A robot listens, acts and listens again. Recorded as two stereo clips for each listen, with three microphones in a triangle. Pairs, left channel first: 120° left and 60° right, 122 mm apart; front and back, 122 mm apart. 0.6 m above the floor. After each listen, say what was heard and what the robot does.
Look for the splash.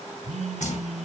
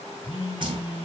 The splash: 130° left. Turn 130° left.
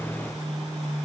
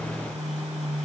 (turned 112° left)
Nothing new. It was at 20° left. Turn 20° left.
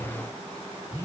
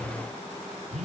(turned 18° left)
I heard a splash from this way, but can't make it out now.